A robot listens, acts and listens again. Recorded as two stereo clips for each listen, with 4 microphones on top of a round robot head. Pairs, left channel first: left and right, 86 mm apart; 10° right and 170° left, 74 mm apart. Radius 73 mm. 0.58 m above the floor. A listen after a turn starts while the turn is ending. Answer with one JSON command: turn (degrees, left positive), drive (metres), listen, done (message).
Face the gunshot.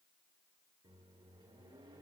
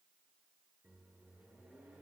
{"listen": true}
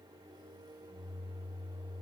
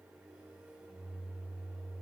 {"listen": true}
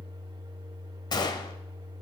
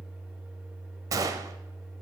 {"turn": 130}
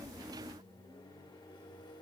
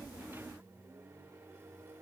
{"done": "Facing where the gunshot came from. I can't hear it now."}